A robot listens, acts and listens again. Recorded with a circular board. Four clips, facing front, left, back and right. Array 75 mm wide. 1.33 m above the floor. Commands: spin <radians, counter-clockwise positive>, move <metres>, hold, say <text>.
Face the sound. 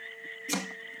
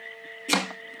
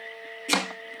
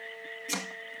spin 2.36
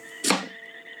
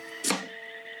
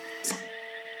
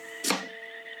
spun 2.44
say Facing the chopping.